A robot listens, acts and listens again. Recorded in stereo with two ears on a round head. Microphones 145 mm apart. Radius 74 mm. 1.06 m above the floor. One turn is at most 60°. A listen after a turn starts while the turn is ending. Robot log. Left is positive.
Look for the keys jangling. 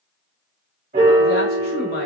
cmd idle
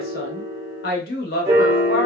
cmd idle
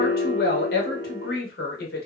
end: I can't make out keys jangling, only a woman speaking and a piano.